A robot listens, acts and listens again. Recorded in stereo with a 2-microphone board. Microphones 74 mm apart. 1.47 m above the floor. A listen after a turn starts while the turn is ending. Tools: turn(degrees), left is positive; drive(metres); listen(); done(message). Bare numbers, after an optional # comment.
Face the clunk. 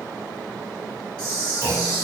# The clunk: about 35° left or 145° left.
turn(35)
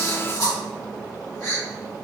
listen()
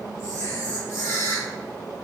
done("I heard a clunk, but can't make it out now. It was about straight ahead or 110° left.")